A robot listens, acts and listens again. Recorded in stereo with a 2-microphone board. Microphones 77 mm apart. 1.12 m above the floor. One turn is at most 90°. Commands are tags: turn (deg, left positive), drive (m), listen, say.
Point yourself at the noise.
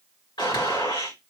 <turn deg="90"/>
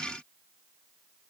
<say>Facing where the gunshot came from. I can't hear it now.</say>